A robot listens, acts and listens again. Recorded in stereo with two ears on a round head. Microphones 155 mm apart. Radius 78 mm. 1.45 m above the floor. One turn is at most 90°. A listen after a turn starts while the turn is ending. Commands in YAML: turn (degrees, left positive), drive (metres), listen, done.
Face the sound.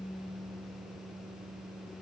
listen: true
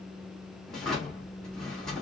turn: 30
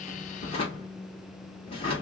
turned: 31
turn: 90
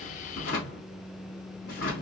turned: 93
turn: 55
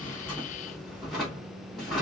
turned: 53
done: "Facing the drawer, 2 to 4 m away."